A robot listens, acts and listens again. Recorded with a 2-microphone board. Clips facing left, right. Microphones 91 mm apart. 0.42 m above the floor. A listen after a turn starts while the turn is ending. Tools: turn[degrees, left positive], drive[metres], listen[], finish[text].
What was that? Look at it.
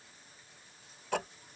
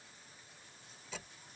Thought: The ticking: about 60° left or 120° left.
Action: turn[60]
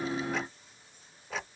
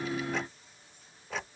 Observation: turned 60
Action: finish[Facing the ticking.]